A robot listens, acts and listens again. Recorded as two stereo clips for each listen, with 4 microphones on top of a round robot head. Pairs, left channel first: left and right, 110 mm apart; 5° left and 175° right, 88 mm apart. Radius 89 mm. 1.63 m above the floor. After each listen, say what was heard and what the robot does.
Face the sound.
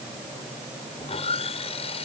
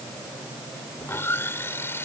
The sawing: 65° left. Turn 65° left.
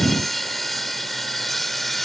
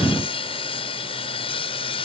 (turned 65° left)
Found it: sawing, straight ahead.